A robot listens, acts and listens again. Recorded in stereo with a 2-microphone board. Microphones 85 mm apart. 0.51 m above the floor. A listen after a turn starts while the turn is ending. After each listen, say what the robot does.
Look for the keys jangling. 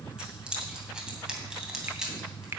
Turn 30° right.
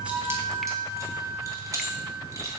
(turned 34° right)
Turn 145° right.
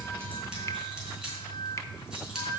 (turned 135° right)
Turn 10° right.
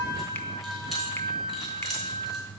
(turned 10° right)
Keep listening.
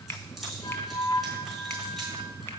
Facing where the keys jangling came from. I can't hear it now.